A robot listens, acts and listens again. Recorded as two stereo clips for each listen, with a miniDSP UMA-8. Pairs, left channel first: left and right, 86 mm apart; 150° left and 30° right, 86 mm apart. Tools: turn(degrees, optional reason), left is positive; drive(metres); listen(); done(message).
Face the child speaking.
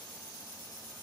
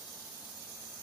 listen()
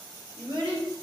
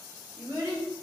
turn(degrees=-85, reason="The child speaking: 85° right.")
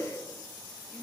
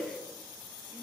listen()
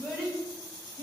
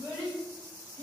turn(degrees=25, reason="The child speaking is now 25° left.")
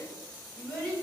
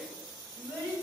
turn(degrees=10, reason="The child speaking is now 10° left.")
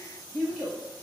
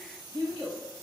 done("Found it: a child speaking, straight ahead, 2 to 4 m away.")